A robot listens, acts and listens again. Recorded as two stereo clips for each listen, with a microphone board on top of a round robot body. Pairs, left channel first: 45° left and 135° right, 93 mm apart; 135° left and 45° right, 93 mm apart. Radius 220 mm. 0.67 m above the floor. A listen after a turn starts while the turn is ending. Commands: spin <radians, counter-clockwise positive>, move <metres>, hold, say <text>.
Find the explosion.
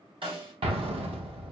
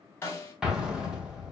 spin -2.27
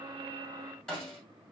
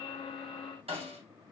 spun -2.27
say Facing where the explosion came from. I can't hear it now.